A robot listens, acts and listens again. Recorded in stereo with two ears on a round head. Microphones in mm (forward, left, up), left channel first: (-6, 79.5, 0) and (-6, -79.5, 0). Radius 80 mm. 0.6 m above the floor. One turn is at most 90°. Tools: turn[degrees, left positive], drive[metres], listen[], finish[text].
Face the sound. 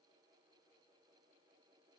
Action: listen[]
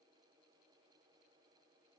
Action: listen[]
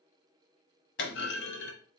Thought: The clunk: about 70° left or 110° left.
Action: turn[70]
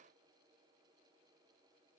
Action: listen[]
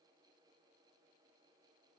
Action: finish[I heard a clunk, but can't make it out now. It was about straight ahead or 40° left.]